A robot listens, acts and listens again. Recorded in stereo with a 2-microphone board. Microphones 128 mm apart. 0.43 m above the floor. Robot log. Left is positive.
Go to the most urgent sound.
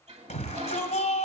note: The shout: about 70° left or 110° left.
cmd yaw +70
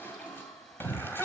note: So it is at 15° left.
cmd yaw +15
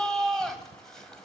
cmd fwd 1.0
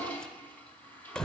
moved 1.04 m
cmd fwd 1.0
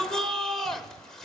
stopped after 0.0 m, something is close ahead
end: I am next to the shout.